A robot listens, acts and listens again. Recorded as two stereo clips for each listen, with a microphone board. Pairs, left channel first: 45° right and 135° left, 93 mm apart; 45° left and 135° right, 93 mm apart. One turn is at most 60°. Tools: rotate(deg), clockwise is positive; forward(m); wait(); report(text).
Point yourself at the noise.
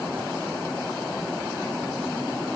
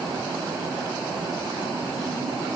wait()
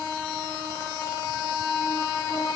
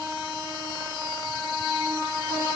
wait()
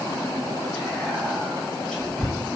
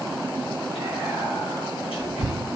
rotate(-40)
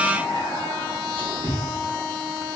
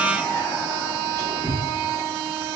rotate(15)
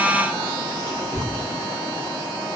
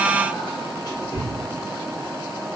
report("Facing the whispering, 1 to 2 m away.")